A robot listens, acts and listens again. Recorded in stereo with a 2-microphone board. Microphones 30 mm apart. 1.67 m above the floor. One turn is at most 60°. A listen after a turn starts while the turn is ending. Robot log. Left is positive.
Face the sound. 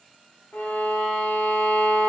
cmd yaw +60
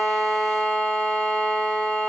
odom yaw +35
note: So it is at 45° left.
cmd yaw +45
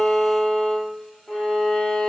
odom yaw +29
note: The violin is now 15° left.
cmd yaw +15
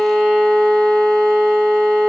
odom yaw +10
end: Facing the violin.